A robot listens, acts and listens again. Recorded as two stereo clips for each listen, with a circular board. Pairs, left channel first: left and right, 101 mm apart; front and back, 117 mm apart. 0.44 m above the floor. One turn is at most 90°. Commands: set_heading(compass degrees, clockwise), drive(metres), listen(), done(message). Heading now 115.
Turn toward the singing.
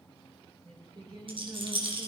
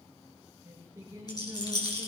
set_heading(205)
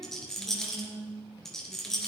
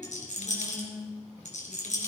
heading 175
set_heading(250)
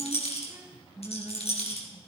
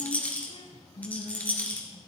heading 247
set_heading(267)
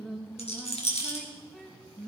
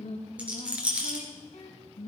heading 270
done("Found it: singing, straight ahead, 2 to 4 m away.")